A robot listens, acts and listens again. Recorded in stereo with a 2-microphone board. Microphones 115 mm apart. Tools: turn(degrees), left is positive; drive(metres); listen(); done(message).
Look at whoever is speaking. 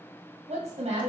turn(degrees=-75)
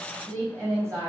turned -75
turn(degrees=-30)
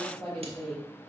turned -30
done("Facing the woman speaking.")